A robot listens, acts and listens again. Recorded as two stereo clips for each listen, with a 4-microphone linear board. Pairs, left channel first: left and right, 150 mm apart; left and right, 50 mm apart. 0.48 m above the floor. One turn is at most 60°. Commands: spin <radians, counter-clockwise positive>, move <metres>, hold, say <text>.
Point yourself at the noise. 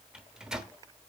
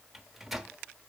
spin -0.52
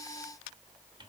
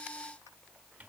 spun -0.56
spin -1.05
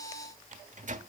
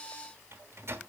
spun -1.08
spin -1.05
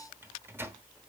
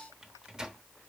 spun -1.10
spin -0.35
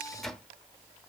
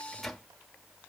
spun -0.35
say Facing the microwave, under 1 m away.